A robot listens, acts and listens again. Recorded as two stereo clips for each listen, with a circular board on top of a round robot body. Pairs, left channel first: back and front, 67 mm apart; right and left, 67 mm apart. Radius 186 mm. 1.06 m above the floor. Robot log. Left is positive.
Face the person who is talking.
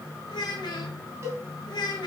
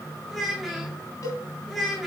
note: The child speaking: straight behind.
cmd yaw +180
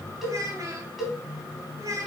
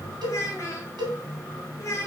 note: The child speaking is now 45° right.
cmd yaw -45
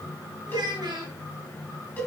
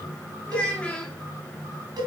note: The child speaking is now 15° right.
cmd yaw -15
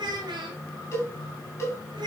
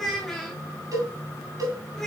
end: Facing the child speaking.